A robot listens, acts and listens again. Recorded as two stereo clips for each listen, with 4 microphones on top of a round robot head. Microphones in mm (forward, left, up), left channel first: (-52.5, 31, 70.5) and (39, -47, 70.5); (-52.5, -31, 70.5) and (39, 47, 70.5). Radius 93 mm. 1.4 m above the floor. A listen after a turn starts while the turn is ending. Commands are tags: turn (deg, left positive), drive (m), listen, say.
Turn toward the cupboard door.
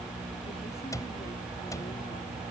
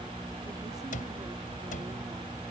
<turn deg="-155"/>
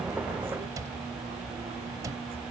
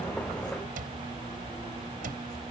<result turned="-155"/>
<turn deg="25"/>
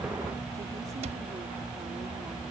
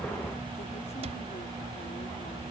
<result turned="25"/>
<listen/>
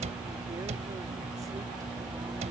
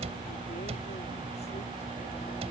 <say>Found it: a cupboard door, straight ahead.</say>